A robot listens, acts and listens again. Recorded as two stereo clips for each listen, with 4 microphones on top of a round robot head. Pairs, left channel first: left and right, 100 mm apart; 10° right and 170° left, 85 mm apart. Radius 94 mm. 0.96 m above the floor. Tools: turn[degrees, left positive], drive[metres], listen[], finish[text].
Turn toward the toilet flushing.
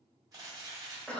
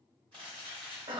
Action: listen[]
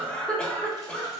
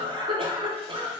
Action: listen[]
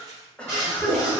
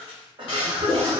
Thought: The toilet flushing: 20° right.
Action: turn[-20]
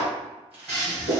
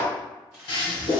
Action: finish[Facing the toilet flushing.]